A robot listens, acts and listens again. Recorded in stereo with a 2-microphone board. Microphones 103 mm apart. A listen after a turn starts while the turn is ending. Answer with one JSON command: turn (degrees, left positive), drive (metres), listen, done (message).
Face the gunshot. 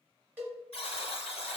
{"listen": true}
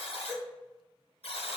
{"listen": true}
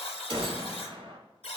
{"turn": -55}
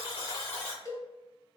{"listen": true}
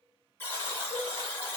{"done": "I heard a gunshot, but can't make it out now. It was about straight ahead or 70° right."}